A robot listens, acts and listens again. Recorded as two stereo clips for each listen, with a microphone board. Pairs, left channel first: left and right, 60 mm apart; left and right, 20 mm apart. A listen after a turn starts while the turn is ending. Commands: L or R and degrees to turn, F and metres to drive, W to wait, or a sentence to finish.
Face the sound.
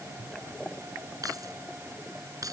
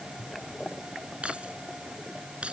R90
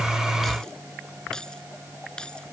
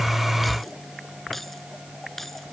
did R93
L15
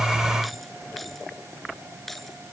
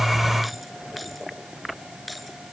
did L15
Facing the keys jangling.